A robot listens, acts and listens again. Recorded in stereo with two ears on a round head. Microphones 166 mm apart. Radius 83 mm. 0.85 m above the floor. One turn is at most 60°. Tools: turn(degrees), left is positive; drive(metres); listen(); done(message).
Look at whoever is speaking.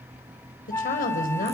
turn(degrees=50)
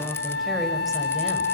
listen()
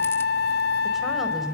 done("Found it: a woman speaking, straight ahead, over 4 m away.")